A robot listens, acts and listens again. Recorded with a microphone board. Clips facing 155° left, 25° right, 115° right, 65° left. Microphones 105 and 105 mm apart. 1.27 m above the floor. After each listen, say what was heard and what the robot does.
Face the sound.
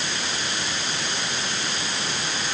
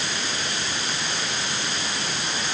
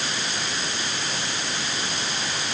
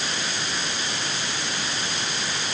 Keep listening.
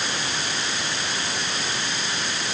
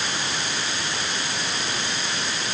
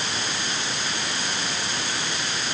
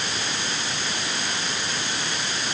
Keep listening.
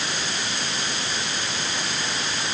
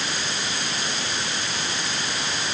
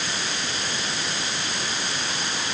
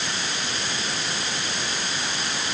I can't make out anything to turn to.